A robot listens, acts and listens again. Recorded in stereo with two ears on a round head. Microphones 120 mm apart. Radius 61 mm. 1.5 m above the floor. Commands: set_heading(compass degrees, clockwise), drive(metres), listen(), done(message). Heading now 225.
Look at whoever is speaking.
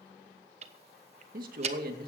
set_heading(315)
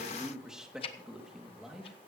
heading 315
done("Facing the man speaking, 2 to 4 m away.")